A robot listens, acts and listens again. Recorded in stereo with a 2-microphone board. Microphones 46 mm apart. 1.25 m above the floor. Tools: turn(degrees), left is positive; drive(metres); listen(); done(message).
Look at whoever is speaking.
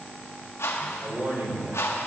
turn(degrees=-55)
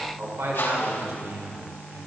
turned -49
turn(degrees=-75)
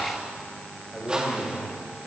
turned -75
done("Found it: a man speaking, straight ahead.")